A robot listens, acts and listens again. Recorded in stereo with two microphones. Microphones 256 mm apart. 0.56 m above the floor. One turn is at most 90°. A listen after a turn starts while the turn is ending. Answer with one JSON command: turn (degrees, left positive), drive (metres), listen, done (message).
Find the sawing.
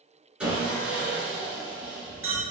{"turn": -30}
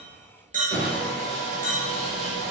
{"turn": 25}
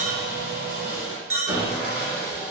{"turn": -10}
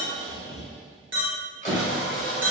{"done": "Found it: sawing, straight ahead, 1 to 2 m away."}